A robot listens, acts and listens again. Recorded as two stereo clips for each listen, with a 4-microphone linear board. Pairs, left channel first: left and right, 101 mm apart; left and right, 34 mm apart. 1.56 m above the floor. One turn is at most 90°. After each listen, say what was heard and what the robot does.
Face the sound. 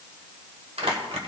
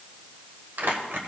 The crumpling: about 75° right or 105° right. Turn 75° right.
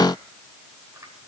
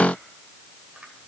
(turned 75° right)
Keep listening.
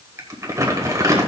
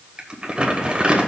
So it is at 30° right. Turn 30° right.
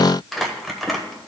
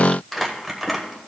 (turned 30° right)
Found it: crumpling, straight ahead.